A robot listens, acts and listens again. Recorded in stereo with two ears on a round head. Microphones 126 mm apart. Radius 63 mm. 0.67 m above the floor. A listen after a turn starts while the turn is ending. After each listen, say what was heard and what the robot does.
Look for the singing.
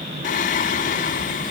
The singing: about 60° left or 120° left. Turn 60° left.
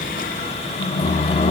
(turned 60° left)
So it is at 50° left. Turn 50° left.
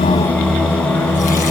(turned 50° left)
Found it: singing, straight ahead, 1 to 2 m away.